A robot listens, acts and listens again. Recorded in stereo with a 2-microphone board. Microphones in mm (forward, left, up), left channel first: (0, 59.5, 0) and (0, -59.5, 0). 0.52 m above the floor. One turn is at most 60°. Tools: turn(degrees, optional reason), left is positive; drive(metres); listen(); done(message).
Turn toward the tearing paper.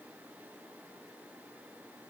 listen()
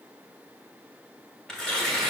turn(degrees=30)
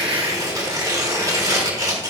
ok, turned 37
turn(degrees=-35, reason="So it is at 35° right.")
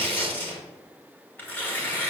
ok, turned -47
turn(degrees=15, reason="The tearing paper is now 15° left.")
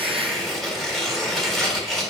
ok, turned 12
done("Found it: tearing paper, straight ahead, 1 to 2 m away.")